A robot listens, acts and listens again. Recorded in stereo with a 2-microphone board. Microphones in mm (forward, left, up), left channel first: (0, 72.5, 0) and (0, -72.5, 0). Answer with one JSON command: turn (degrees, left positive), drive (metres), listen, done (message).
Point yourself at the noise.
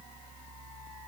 {"listen": true}
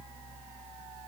{"listen": true}
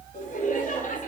{"turn": 70}
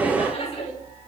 {"turn": 45}
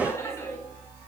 {"turn": 20}
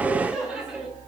{"done": "Facing the laughter."}